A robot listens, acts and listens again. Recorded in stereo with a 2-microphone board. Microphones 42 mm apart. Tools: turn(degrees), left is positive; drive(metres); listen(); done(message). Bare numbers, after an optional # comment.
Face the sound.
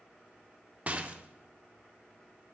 # The rattle: about 35° right or 145° right.
turn(-35)
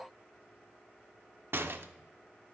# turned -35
# So it is at 115° right.
turn(-115)
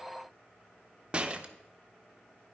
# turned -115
# The rattle is now 30° right.
turn(-30)
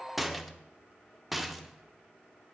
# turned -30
done("Facing the rattle, under 1 m away.")